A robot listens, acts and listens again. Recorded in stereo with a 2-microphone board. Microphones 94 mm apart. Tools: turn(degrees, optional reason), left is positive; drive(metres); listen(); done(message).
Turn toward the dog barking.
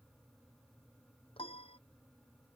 listen()
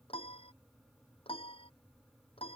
listen()
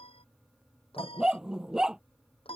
turn(degrees=-30)
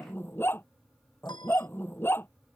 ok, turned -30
turn(degrees=25, reason="So it is at 25° left.")
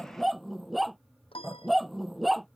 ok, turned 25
done("Found it: a dog barking, straight ahead.")